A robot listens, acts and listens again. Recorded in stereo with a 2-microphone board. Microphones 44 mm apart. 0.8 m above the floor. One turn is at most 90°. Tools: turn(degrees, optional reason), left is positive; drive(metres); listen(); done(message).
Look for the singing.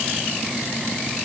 listen()
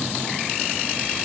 listen()
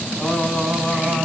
turn(degrees=-30)
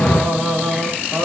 turn(degrees=-90, reason="So it is at 130° right.")
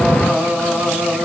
turn(degrees=-50, reason="The singing is now 50° right.")
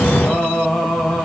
done("Facing the singing.")